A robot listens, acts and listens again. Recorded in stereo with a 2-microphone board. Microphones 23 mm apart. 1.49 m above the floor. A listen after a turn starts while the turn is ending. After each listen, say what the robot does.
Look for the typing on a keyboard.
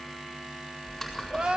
Turn 30° left.
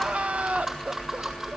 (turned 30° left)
Turn 25° right.
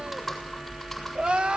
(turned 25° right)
Found it: typing on a keyboard, straight ahead, over 4 m away.